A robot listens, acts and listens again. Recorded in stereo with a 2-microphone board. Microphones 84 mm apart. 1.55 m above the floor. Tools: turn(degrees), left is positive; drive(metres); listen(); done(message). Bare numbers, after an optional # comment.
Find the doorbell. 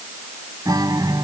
listen()
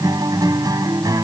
listen()
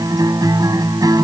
done("I can't make out a doorbell, only a guitar.")